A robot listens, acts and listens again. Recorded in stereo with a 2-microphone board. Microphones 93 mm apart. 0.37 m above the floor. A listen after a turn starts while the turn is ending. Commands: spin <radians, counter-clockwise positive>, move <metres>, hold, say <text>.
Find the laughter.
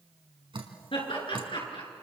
spin 1.13
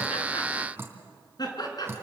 spin 0.87
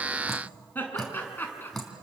spin 0.44
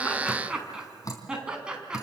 spin -0.17
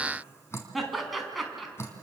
say Found it: laughter, straight ahead.